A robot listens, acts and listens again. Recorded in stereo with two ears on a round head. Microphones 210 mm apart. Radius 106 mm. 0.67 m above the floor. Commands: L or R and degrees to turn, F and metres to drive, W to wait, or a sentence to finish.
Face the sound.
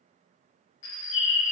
L55
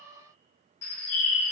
L65
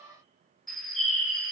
Found it: a bird, straight ahead.